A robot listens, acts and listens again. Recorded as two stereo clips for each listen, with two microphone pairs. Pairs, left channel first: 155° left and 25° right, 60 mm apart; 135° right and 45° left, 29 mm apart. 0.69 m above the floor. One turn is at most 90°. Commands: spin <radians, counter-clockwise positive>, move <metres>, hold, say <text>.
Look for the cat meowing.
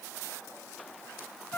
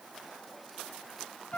hold
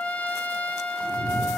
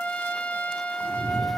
spin 1.57
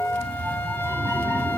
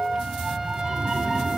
say Facing the cat meowing.